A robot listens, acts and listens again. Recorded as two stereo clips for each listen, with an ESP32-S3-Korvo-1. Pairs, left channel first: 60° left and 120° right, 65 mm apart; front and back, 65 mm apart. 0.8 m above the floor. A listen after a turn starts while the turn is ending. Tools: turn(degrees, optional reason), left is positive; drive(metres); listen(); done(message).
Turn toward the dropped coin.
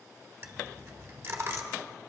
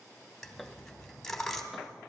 turn(degrees=-85, reason="The dropped coin: 85° right.")
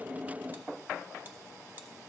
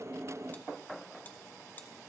done("Facing where the dropped coin came from. I can't hear it now.")